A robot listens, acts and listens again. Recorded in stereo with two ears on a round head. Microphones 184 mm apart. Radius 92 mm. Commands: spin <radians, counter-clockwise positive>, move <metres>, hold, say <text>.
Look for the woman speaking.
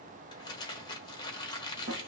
hold
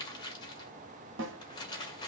hold
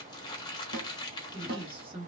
spin -0.44
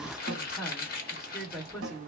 say Facing the woman speaking.